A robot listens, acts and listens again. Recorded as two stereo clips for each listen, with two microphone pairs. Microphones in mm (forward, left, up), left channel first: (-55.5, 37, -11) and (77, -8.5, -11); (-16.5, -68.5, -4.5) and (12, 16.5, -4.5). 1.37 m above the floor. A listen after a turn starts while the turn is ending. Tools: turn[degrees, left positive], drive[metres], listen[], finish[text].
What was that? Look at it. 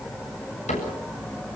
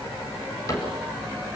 Thought: The cupboard door: 160° right.
Action: turn[-160]
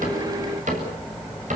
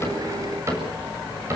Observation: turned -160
Thought: The cupboard door is now 15° left.
Action: turn[15]
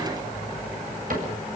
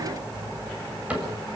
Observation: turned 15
Action: finish[Facing the cupboard door.]